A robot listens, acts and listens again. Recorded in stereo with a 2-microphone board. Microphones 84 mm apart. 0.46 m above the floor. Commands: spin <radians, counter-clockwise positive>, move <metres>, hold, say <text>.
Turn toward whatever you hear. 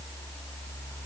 hold
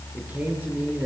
spin -0.35
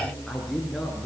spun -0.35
say Found it: a man speaking, straight ahead, over 4 m away.